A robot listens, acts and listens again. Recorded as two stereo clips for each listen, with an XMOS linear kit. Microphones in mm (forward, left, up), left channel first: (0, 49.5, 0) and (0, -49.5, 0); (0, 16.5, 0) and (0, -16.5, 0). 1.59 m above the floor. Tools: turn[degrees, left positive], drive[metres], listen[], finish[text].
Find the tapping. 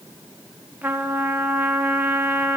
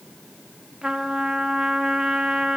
Action: listen[]
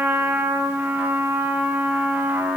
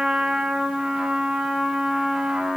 Action: listen[]
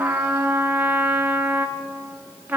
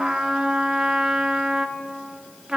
Action: finish[I can't make out tapping, only a trumpet.]